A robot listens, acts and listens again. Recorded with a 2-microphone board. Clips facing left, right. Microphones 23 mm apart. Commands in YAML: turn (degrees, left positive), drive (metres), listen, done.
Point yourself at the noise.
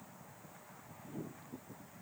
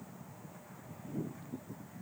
listen: true
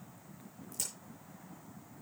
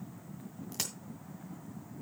turn: -55
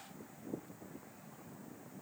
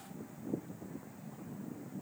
listen: true
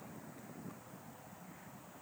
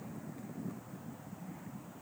done: "I heard a crack, but can't make it out now. It was about straight ahead or 70° right."